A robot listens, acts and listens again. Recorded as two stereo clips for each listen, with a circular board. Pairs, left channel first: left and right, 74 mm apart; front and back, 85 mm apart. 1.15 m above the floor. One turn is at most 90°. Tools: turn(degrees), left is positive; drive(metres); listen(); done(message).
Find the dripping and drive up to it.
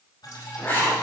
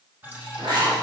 turn(degrees=90)
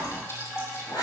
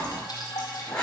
turn(degrees=40)
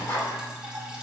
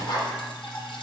turn(degrees=-10)
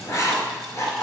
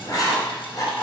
listen()
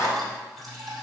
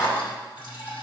drive(metres=1.0)
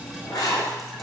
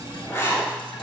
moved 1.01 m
drive(metres=1.0)
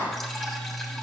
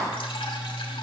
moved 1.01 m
drive(metres=1.0)
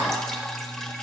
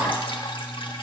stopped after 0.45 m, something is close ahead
turn(degrees=10)
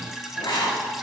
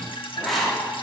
done("Arrived at the dripping, straight ahead.")